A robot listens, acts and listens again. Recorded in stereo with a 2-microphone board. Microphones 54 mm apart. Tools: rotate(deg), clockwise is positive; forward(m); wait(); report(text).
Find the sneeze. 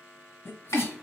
rotate(-45)
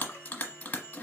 wait()
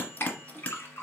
report("I heard a sneeze, but can't make it out now. It was about straight ahead or 90° left.")